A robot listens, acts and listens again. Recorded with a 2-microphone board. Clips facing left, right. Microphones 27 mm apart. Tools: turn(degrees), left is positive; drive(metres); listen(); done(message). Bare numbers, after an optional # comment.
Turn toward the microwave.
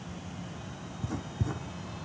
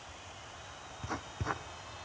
listen()
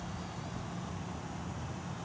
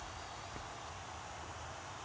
listen()
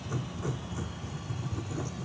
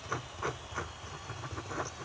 done("I can't make out a microwave, only writing.")